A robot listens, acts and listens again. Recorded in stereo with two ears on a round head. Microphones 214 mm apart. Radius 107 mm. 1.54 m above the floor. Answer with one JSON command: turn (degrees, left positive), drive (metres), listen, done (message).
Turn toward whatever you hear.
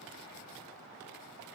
{"listen": true}
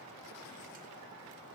{"listen": true}
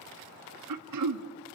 {"turn": -90}
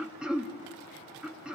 {"done": "Found it: throat clearing, straight ahead."}